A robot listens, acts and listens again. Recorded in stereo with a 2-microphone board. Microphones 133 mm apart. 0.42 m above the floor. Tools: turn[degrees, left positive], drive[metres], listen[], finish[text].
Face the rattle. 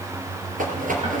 Action: turn[-90]
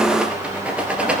Thought: So it is at 10° right.
Action: turn[-10]
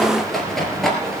Action: finish[Found it: a rattle, straight ahead, 2 to 4 m away.]